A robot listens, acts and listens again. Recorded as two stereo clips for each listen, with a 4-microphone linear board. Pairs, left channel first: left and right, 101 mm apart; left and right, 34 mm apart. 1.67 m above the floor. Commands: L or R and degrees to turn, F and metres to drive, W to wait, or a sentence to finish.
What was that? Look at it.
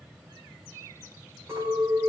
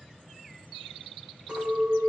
R30
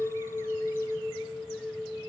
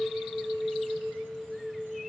Found it: a clink, straight ahead, over 4 m away.